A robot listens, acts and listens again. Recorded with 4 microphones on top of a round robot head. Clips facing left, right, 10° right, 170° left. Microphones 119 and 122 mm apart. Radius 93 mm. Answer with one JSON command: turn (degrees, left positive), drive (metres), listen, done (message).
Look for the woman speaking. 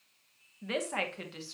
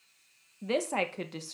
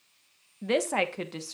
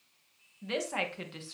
{"turn": -55}
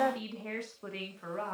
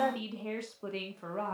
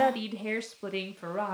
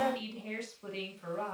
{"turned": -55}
{"turn": -30}
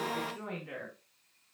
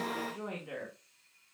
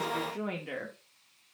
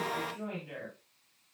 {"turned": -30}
{"turn": -10}
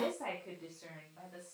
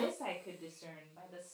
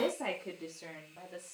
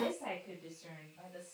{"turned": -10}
{"turn": -15}
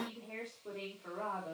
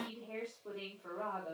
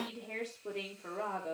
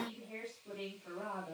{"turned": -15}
{"done": "Facing the woman speaking."}